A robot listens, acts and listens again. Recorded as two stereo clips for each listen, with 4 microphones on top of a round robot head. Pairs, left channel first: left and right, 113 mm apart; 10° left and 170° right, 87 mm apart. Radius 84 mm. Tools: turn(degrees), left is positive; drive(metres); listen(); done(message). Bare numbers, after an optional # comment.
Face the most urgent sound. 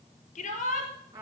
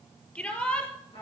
# The shout: 85° left.
turn(85)
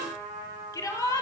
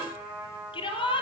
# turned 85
# The shout is now 25° left.
turn(25)
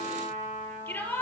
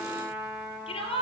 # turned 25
# The shout is now 15° left.
turn(15)
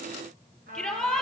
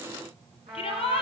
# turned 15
done("Facing the shout.")